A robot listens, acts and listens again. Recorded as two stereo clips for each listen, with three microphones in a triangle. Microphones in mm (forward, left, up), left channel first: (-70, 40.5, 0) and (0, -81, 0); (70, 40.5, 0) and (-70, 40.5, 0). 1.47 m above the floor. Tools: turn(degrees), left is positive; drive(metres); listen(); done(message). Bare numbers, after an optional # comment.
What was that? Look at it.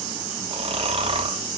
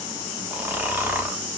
# The snoring: 105° right.
turn(-105)
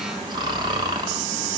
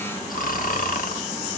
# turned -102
done("Found it: snoring, straight ahead.")